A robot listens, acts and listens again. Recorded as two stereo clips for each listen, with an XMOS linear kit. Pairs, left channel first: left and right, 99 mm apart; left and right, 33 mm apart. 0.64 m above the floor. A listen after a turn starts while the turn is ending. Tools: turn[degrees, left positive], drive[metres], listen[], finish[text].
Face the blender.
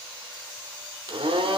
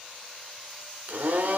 Thought: The blender: about 70° right or 110° right.
Action: turn[-70]
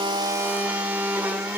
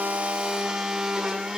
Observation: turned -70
Thought: So it is at 20° right.
Action: turn[-20]
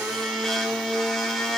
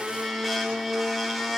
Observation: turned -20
Action: finish[Found it: a blender, straight ahead.]